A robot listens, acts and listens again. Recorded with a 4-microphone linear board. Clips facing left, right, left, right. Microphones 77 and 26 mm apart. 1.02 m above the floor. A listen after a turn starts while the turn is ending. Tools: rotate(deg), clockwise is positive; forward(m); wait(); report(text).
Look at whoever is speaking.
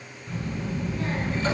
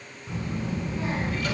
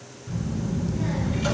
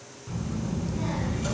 rotate(25)
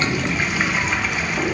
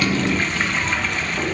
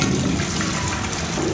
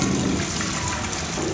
report("Found it: a child speaking, straight ahead.")